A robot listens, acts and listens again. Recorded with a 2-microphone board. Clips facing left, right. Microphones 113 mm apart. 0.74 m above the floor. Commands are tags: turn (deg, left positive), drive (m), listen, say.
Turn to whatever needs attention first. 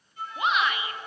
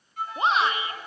<turn deg="-30"/>
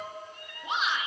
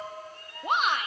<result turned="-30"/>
<turn deg="-115"/>
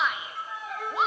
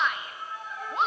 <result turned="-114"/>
<say>Facing the shout, 1 to 2 m away.</say>